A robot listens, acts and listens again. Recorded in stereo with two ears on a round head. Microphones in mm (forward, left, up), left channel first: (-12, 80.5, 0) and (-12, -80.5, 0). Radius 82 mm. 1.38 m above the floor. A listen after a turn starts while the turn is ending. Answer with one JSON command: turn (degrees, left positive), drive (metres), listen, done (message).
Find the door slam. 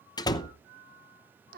{"turn": 20}
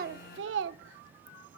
{"listen": true}
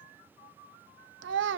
{"done": "I heard a door slam, but can't make it out now. It was about straight ahead or 140° left."}